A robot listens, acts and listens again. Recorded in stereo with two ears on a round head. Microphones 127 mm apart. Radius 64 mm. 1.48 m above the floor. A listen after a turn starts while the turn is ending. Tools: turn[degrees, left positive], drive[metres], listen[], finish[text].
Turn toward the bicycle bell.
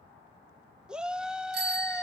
Action: turn[-90]
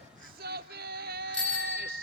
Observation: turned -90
Thought: So it is at 10° left.
Action: turn[10]
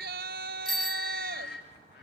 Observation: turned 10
Action: finish[Facing the bicycle bell.]